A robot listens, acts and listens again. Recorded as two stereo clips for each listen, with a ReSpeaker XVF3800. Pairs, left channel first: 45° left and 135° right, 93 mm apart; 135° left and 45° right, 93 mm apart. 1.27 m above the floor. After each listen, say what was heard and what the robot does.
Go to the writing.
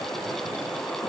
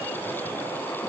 Keep listening.
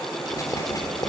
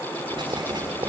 The writing: 10° right. Turn 10° right.
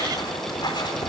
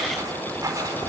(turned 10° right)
Drive 1.0 m forward.
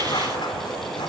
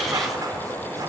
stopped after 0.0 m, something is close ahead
Blocked. The writing is further on, straight ahead.